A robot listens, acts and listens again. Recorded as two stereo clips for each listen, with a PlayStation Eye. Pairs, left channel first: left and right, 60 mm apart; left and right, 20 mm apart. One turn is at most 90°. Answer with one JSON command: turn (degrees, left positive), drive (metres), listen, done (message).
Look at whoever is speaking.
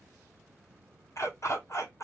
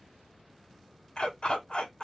{"listen": true}
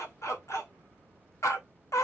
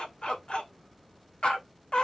{"listen": true}
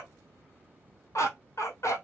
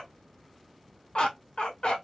{"done": "I can't make out anyone speaking, only a dog barking."}